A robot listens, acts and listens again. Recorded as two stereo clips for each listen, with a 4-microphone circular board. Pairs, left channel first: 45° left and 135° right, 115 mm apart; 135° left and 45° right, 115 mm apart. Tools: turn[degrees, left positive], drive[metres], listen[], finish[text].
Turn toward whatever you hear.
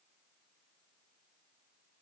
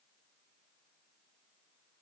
Action: listen[]
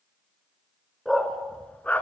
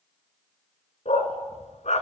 Thought: The dog barking: 120° left.
Action: turn[120]
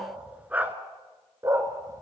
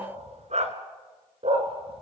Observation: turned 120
Thought: The dog barking is now 70° right.
Action: turn[-70]
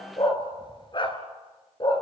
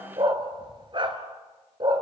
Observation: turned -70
Action: finish[Facing the dog barking.]